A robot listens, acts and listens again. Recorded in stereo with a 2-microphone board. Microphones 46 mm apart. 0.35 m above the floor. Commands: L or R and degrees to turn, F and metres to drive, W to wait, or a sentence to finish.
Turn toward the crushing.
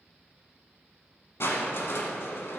L70
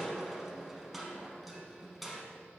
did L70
Facing the crushing, under 1 m away.